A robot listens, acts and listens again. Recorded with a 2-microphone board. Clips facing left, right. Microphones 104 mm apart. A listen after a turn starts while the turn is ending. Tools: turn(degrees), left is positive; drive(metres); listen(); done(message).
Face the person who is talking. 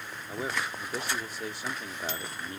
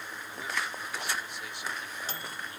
turn(degrees=40)
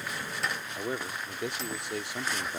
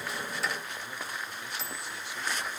turn(degrees=100)
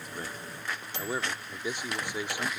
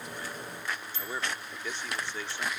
turn(degrees=15)
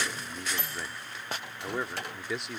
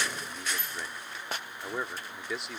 done("Facing the man speaking.")